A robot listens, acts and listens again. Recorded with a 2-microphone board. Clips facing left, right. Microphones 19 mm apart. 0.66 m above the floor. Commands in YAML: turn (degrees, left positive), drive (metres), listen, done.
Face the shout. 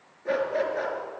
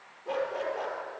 listen: true
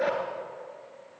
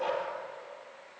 listen: true
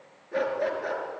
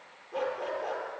done: "I can't make out a shout to turn to."